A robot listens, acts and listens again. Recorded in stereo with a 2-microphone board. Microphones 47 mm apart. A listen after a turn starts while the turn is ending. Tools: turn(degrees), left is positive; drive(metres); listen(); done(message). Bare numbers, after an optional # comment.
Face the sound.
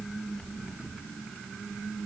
listen()
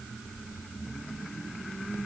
listen()
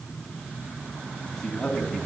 turn(30)
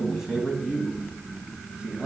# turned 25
# So it is at 20° right.
turn(-20)
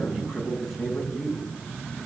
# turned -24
done("Found it: a man speaking, straight ahead.")